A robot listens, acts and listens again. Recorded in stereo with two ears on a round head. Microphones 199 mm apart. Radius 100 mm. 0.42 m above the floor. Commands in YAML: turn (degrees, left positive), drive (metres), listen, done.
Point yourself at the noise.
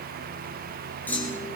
turn: 30
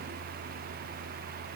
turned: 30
listen: true
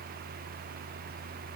done: "I heard a clunk, but can't make it out now. It was about 20° right or 140° left."